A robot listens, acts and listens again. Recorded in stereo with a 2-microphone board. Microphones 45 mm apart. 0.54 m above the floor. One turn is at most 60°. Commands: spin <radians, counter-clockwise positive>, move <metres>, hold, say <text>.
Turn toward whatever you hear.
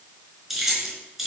spin -0.52
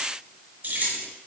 spin -1.05
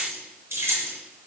spin -1.05
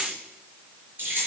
spin -0.70
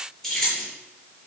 spin 0.26
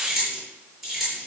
say Facing the keys jangling, over 4 m away.